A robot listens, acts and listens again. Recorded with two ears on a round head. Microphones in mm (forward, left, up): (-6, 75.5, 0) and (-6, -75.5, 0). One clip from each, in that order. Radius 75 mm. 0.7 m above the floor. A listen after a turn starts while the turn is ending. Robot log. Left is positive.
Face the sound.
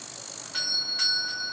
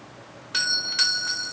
note: The doorbell: about 55° right or 125° right.
cmd yaw -55
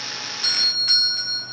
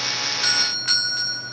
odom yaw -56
note: So it is at 15° right.
cmd yaw -15
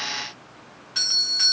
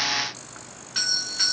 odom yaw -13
end: Facing the doorbell, 1 to 2 m away.